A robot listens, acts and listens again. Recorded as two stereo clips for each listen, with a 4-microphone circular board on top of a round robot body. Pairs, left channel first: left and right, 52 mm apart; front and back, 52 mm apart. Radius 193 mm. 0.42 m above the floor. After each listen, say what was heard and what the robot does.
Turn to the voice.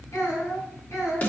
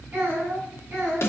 The child speaking: 125° left. Turn 125° left.
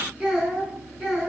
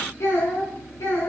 The child speaking is now 10° right. Turn 10° right.
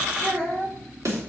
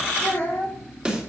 Found it: a child speaking, straight ahead.